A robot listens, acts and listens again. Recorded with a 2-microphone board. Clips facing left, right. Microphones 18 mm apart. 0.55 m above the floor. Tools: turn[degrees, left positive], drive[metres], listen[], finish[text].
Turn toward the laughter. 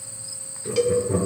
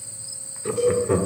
Thought: The laughter: about 60° right or 120° right.
Action: turn[-60]
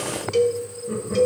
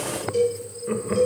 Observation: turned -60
Thought: So it is at 50° right.
Action: turn[-50]
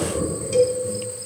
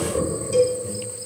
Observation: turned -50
Thought: The laughter is now 30° right.
Action: turn[-30]
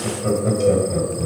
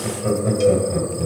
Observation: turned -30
Action: finish[Facing the laughter, 2 to 4 m away.]